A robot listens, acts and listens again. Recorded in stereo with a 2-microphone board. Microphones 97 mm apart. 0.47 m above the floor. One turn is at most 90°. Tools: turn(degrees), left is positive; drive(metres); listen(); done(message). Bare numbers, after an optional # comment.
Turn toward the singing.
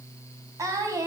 # The singing: about 35° right or 145° right.
turn(-35)
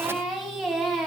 done("Facing the singing.")